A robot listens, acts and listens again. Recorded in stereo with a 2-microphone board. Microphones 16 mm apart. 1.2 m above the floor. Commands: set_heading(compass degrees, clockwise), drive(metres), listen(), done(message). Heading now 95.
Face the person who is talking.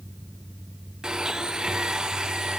listen()
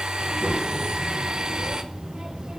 set_heading(185)
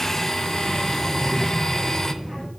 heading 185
set_heading(195)
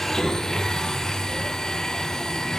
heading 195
done("Found it: a child speaking, straight ahead.")